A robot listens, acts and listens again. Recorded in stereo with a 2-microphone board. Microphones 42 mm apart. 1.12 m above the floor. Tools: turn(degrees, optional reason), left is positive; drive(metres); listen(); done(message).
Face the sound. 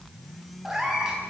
turn(degrees=-30)
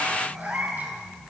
turn(degrees=-135, reason="So it is at 135° right.")
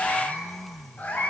turn(degrees=35, reason="The cat meowing is now 35° left.")
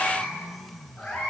done("Found it: a cat meowing, straight ahead, over 4 m away.")